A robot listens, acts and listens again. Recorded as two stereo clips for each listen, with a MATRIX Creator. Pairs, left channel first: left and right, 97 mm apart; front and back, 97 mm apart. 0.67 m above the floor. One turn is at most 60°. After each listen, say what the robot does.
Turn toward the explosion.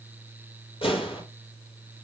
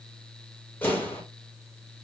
Turn 60° left.
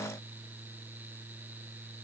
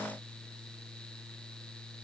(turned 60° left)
Turn 10° left.
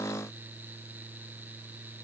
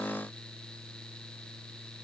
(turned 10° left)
I heard an explosion from this way, but can't make it out now.